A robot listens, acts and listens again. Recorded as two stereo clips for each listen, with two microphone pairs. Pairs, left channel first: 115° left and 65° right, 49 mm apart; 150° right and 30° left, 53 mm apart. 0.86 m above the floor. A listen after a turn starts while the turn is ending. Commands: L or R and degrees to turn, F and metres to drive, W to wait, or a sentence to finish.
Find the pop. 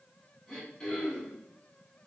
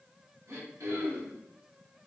W
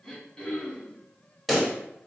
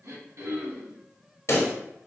R150
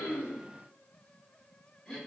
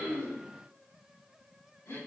I heard a pop from this way, but can't make it out now.